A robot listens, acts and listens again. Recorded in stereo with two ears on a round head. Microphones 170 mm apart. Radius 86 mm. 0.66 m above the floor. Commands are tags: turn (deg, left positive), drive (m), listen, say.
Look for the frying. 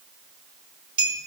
<listen/>
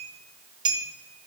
<listen/>
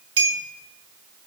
<say>I can't make out frying to turn to.</say>